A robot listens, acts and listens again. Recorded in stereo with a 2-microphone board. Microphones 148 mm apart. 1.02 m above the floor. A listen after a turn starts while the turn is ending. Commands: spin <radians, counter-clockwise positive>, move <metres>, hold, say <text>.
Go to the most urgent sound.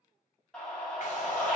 spin 0.52
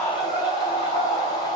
spin 2.44
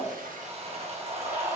spin -0.35
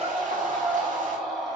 move 1.0
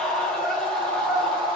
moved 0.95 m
move 1.0
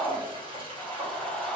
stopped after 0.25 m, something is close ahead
say Arrived at the scream, straight ahead.